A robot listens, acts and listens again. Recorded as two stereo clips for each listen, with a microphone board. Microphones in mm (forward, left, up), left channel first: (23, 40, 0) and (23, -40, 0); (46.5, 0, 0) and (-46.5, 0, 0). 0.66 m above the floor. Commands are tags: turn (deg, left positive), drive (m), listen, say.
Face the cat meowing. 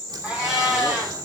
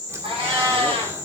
<turn deg="-165"/>
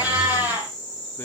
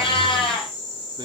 <turn deg="-20"/>
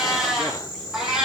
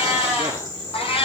<say>Found it: a cat meowing, straight ahead, over 4 m away.</say>